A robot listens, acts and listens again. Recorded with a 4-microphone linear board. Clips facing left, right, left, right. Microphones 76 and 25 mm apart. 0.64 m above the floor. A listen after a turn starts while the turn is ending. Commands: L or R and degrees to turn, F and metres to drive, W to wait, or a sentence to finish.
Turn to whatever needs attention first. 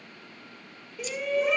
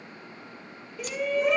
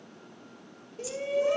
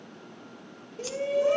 L30
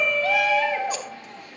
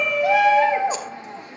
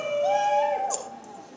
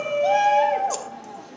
R35
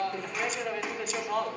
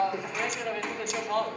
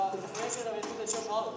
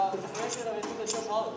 Facing the shout.